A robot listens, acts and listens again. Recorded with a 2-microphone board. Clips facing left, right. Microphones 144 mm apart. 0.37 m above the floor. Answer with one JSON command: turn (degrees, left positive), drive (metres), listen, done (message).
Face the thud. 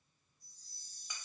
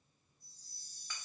{"listen": true}
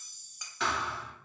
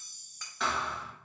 {"turn": 30}
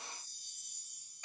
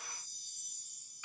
{"listen": true}
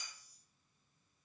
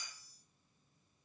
{"done": "I heard a thud, but can't make it out now. It was about 30° right or 150° left."}